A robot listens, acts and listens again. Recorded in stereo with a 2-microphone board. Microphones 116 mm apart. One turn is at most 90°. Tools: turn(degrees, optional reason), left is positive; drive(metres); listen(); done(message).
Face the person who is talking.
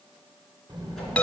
turn(degrees=-35, reason="The child speaking: about 35° right or 145° right.")
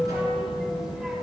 done("Found it: a child speaking, straight ahead.")